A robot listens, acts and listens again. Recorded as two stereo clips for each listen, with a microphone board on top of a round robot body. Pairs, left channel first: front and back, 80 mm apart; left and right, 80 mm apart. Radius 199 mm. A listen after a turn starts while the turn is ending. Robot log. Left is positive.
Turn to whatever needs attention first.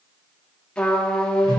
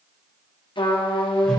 cmd idle
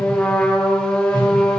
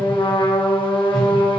cmd idle
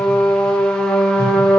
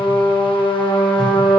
end: I can't make out anything urgent, only a trumpet and a whoosh.